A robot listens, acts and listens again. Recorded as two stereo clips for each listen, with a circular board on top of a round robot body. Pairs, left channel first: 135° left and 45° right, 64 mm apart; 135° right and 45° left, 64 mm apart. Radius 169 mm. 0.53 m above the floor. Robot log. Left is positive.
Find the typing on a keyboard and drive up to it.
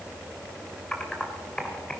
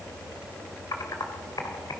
note: The typing on a keyboard: 145° right.
cmd yaw -145
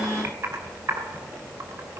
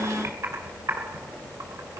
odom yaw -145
cmd fwd 1.0
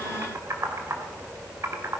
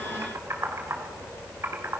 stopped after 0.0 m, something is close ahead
end: Something is in my way. I am facing the typing on a keyboard but have not reached it.